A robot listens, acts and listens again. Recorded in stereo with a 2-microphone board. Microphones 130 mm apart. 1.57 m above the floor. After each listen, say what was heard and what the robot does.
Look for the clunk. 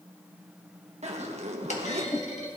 The clunk: about 65° left or 115° left. Turn 65° left.
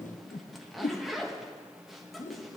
Keep listening.
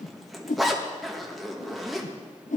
I heard a clunk, but can't make it out now. It was about straight ahead or 50° left.